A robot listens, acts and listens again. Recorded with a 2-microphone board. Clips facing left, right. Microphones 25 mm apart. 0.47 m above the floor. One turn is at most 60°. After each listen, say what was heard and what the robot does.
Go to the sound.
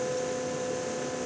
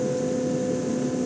Keep listening.
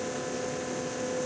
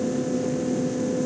Keep listening.
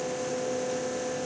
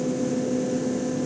I can't make out anything.